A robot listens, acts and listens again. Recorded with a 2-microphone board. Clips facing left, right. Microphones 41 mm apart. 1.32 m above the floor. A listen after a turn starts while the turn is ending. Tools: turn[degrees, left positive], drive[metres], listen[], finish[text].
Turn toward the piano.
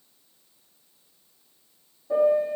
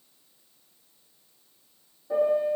Action: turn[30]
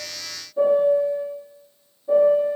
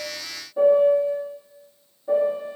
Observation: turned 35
Thought: So it is at 30° right.
Action: turn[-30]
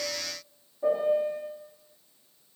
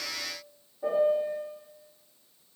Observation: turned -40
Thought: The piano is now 10° left.
Action: turn[10]
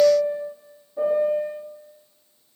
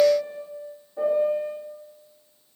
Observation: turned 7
Action: finish[Facing the piano.]